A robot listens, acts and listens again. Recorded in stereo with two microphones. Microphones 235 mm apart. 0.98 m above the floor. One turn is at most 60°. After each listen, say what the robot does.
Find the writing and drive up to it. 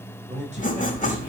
Turn 35° left.
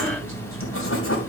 Turn 60° left.
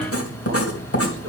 Turn 60° left.
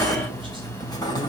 Turn 15° left.
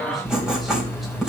Drive 1.0 m forward.
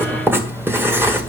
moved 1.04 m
Turn 10° right.
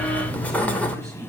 Drive 1.0 m forward.
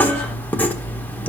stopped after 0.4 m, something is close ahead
Arrived at the writing, straight ahead.